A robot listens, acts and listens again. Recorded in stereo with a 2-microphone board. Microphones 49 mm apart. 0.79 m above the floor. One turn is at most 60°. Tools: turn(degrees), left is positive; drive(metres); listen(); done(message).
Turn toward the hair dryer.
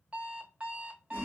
listen()
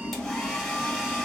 turn(degrees=30)
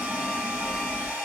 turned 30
turn(degrees=-30)
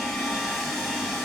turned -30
done("Found it: a hair dryer, straight ahead.")